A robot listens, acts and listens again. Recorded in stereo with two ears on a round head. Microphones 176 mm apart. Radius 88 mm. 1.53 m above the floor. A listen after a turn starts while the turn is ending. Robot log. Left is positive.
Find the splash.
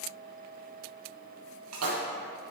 cmd yaw -90
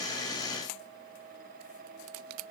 end: Facing where the splash came from. I can't hear it now.